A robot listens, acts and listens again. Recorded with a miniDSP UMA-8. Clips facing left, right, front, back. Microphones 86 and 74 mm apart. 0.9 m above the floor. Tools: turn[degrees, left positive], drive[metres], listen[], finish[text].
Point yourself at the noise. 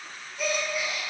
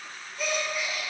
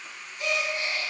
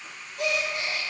Thought: The gasp: straight behind.
Action: turn[180]
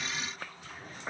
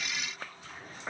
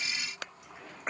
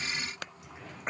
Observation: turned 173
Action: finish[Facing where the gasp came from. I can't hear it now.]